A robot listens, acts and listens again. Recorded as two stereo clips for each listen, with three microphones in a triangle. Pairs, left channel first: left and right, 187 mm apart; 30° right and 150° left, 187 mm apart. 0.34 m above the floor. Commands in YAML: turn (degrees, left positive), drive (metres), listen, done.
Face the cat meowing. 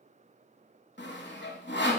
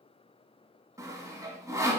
listen: true
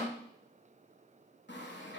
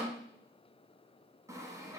listen: true
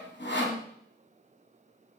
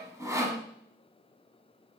done: "I can't make out a cat meowing, only sawing."